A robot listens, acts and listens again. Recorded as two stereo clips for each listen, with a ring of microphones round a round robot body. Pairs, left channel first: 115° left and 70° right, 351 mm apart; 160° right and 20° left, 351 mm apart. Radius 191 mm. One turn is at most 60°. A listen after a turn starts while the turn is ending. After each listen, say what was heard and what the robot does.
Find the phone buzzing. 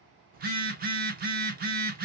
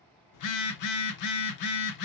The phone buzzing: 130° right. Turn 60° right.
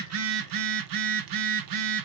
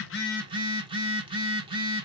The phone buzzing is now 55° right. Turn 55° right.
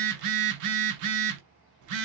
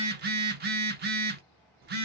The phone buzzing is now 40° right. Turn 40° right.
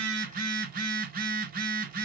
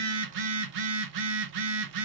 Facing the phone buzzing, under 1 m away.